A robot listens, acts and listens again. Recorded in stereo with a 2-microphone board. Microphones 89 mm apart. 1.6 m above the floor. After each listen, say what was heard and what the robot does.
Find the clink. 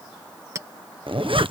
The clink: about 35° right or 145° right. Turn 35° right.
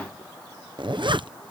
Keep listening.
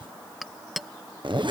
Found it: a clink, straight ahead.